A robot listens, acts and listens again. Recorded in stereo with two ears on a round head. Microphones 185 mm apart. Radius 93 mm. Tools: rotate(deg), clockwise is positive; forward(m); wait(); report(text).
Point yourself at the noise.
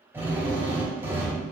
rotate(30)
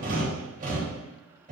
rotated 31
rotate(135)
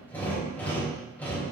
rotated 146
rotate(-10)
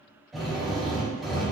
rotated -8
report("Found it: a drill, straight ahead.")